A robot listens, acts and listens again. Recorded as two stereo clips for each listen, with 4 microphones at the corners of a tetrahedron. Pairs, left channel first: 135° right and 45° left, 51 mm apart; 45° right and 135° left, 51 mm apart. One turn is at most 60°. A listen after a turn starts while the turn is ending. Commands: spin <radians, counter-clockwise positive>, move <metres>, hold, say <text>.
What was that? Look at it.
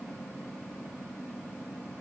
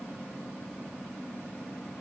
hold
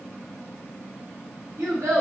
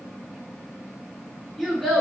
spin 0.70
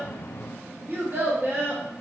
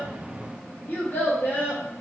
say Found it: a child speaking, straight ahead, under 1 m away.